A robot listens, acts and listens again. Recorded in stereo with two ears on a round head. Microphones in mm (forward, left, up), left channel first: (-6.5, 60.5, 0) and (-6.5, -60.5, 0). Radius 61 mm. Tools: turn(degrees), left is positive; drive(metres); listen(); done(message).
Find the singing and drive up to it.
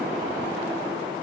listen()
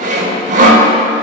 listen()
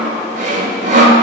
done("I can't make out singing, only sawing.")